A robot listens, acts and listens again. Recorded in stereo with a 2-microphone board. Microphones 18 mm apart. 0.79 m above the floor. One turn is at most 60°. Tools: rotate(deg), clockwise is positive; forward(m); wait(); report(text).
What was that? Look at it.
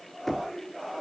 rotate(-30)
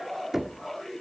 rotate(20)
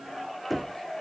report("Facing the knocking.")